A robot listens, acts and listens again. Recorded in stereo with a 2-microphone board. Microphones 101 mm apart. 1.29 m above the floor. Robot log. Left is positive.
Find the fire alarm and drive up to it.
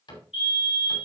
note: The fire alarm: about 70° left or 110° left.
cmd yaw +70
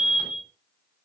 note: So it is at 25° left.
cmd yaw +25
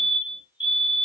note: The fire alarm is now 15° right.
cmd yaw -15
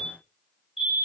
cmd fwd 1.0
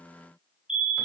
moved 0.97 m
note: The fire alarm is now 10° right.
cmd yaw -10
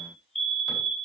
cmd fwd 1.0
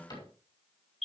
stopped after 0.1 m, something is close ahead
end: Something is in my way. I am facing the fire alarm but have not reached it.